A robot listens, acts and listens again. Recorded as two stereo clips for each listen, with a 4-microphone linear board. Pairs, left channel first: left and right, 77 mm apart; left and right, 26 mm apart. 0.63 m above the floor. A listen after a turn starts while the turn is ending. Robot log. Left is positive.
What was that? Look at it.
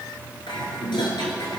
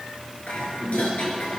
cmd yaw +90
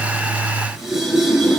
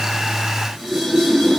end: Found it: dishes clattering, straight ahead, over 4 m away.